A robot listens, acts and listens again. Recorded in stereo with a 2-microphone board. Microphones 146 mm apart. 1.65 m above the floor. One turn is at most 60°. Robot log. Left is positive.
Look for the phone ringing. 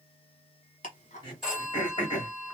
cmd yaw -30
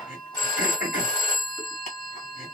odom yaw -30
note: So it is at 30° left.
cmd yaw +30
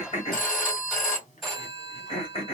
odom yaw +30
end: Facing the phone ringing, 1 to 2 m away.